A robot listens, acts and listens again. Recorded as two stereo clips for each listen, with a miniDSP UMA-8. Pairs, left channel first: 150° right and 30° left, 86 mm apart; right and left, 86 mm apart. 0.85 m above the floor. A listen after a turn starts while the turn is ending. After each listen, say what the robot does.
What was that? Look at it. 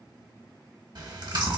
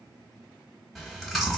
Facing the chewing, 1 to 2 m away.